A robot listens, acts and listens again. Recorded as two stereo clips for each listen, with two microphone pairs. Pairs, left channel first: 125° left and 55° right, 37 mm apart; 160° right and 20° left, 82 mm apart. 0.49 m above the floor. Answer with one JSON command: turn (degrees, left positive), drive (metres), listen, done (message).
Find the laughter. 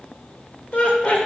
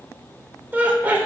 {"turn": 85}
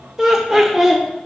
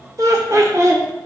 {"turn": 25}
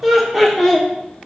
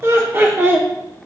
{"turn": 35}
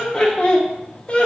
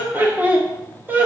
{"turn": 75}
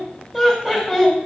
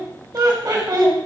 {"turn": 20}
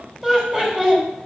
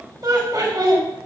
{"done": "Facing the laughter, 1 to 2 m away."}